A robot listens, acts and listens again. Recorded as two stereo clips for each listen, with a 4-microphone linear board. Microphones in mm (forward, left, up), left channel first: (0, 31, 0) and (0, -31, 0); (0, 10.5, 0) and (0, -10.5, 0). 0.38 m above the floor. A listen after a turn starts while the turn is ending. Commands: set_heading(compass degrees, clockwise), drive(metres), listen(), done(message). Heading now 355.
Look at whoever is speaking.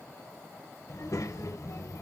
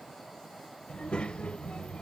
set_heading(300)
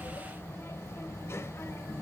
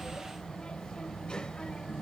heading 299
set_heading(249)
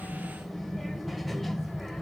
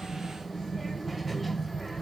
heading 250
done("Found it: a child speaking, straight ahead, under 1 m away.")